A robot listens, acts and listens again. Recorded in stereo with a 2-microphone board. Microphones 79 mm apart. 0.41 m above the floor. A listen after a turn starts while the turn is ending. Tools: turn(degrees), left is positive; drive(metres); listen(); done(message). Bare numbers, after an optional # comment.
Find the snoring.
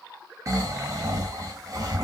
# The snoring: about 40° right or 140° right.
turn(-40)
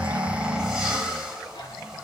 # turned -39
# So it is at 10° right.
turn(-10)
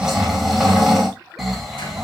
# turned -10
done("Facing the snoring.")